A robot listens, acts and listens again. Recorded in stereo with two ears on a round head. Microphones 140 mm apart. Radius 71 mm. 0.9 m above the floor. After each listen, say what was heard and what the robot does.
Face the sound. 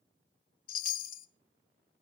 The chime: about 60° left or 120° left. Turn 60° left.
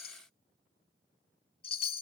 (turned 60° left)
So it is at 40° left. Turn 40° left.
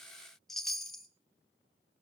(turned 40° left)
Found it: a chime, straight ahead, 1 to 2 m away.